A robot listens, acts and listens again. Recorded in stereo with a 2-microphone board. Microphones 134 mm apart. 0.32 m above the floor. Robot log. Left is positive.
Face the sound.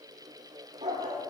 note: The dog barking: about 55° right or 125° right.
cmd yaw -55
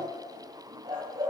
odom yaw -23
note: The dog barking: about 40° right or 140° right.
cmd yaw -40
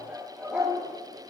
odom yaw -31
note: So it is at 15° right.
cmd yaw -15
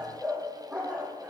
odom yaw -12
note: The dog barking is now 10° right.
cmd yaw -10
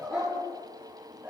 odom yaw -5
end: Facing the dog barking, over 4 m away.